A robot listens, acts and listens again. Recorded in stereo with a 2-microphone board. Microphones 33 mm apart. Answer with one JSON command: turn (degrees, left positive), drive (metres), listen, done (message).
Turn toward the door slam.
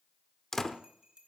{"turn": 15}
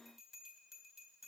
{"listen": true}
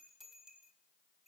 {"done": "I heard a door slam, but can't make it out now. It was about straight ahead or 150° left."}